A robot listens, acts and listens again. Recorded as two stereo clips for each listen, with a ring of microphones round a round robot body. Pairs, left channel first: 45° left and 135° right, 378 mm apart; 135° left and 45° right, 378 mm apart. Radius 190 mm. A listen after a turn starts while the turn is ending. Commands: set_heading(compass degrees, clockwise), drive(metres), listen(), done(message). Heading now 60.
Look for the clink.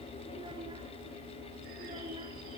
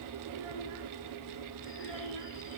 listen()
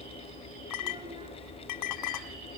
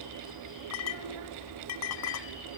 set_heading(335)
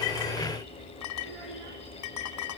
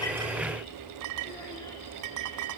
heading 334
done("Found it: a clink, straight ahead, 1 to 2 m away.")